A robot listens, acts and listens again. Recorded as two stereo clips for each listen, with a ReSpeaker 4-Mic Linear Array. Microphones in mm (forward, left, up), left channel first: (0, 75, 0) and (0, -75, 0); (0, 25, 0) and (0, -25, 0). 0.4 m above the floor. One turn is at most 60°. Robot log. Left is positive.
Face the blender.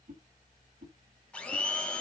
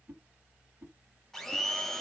cmd yaw +30
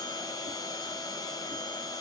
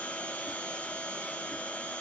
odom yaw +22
note: So it is at 155° left.
cmd yaw +60
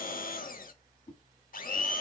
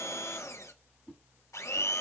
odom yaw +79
note: The blender is now 75° left.
cmd yaw +60
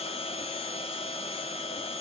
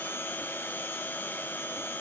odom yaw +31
note: The blender is now 40° left.
cmd yaw +40
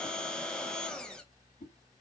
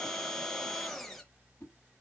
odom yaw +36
end: Found it: a blender, straight ahead, under 1 m away.